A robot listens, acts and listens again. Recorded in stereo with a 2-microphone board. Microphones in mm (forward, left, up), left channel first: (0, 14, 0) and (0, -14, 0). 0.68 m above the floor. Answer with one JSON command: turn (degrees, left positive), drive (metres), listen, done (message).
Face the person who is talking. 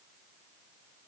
{"listen": true}
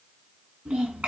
{"turn": -50}
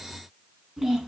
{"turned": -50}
{"done": "Found it: a child speaking, straight ahead, 2 to 4 m away."}